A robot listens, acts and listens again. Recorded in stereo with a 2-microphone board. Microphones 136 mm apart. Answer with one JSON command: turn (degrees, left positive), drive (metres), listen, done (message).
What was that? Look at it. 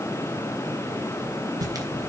{"turn": -25}
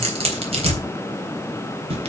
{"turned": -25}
{"turn": -130}
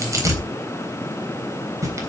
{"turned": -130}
{"turn": -25}
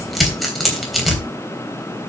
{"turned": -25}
{"done": "Found it: tearing paper, straight ahead."}